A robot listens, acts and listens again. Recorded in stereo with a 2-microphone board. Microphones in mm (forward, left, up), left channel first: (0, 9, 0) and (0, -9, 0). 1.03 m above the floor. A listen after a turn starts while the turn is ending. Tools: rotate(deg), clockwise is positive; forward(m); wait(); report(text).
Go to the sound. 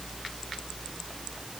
wait()
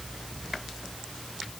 wait()
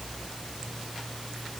report("I can't make out anything.")